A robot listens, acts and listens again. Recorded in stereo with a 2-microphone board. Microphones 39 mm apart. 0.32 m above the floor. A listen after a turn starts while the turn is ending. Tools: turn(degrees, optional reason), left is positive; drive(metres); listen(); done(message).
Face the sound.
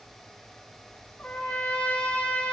turn(degrees=45, reason="The trumpet: about 45° left or 135° left.")
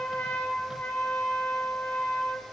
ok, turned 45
turn(degrees=80, reason="So it is at 80° left.")
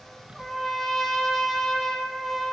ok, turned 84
done("Facing the trumpet.")